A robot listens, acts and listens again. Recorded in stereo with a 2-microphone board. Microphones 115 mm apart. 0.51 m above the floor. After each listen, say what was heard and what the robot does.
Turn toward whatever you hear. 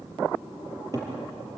The cupboard door: about 35° right or 145° right. Turn 35° right.
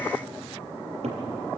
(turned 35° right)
So it is at 110° right. Turn 110° right.
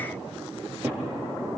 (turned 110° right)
The cupboard door is now 20° right. Turn 20° right.
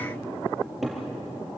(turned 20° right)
Facing the cupboard door.